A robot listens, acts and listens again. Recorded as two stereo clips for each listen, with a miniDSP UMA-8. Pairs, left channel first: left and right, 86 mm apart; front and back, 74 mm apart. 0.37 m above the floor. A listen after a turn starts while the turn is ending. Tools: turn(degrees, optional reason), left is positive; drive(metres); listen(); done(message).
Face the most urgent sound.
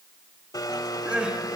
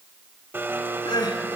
turn(degrees=-10, reason="The crying: 10° right.")
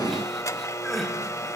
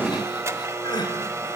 done("Facing the crying.")